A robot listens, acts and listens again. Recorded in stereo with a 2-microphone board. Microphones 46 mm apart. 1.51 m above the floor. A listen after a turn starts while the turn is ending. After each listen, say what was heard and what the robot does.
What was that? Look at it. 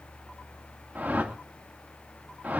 The whoosh: about 35° right or 145° right. Turn 35° right.
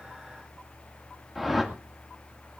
Found it: a whoosh, straight ahead.